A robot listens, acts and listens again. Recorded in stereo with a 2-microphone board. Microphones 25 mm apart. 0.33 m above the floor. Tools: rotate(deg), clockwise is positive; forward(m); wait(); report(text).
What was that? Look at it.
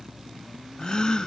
rotate(-35)
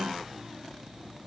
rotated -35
wait()
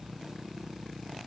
report("I heard a gasp, but can't make it out now. It was about straight ahead or 110° left.")